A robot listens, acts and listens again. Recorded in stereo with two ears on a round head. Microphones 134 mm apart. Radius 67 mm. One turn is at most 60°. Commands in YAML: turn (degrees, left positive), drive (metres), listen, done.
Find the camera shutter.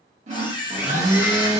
turn: 30
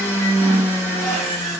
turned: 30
listen: true
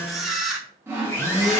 done: "Found it: a camera shutter, straight ahead, under 1 m away."